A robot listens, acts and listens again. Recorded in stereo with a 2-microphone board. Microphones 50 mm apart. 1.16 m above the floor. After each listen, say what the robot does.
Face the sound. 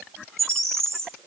Turn 65° right.
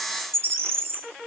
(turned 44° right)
Turn 55° right.
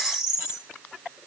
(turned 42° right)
Turn 15° right.
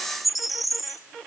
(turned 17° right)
Facing the bird, under 1 m away.